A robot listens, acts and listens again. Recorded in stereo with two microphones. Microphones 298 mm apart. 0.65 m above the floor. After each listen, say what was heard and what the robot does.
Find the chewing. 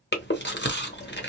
The chewing: about 35° left or 145° left. Turn 35° left.
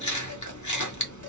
So it is at 105° left. Turn 105° left.
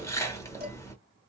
The chewing is now 10° left. Turn 10° left.
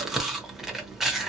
Facing the chewing, under 1 m away.